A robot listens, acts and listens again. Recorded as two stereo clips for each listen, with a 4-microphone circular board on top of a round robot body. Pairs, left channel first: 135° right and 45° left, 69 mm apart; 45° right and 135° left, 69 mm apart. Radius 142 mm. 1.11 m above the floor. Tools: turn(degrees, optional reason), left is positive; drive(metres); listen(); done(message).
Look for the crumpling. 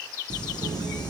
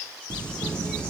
turn(degrees=-120, reason="The crumpling: 120° right.")
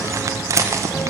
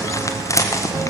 done("Found it: crumpling, straight ahead.")